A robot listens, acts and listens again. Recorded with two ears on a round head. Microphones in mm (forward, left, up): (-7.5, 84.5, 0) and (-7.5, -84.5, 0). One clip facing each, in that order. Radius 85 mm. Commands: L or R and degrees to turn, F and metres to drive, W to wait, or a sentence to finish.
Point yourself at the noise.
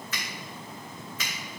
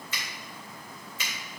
R25
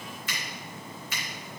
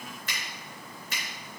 R130
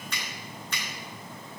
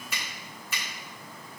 Found it: a finger snap, straight ahead.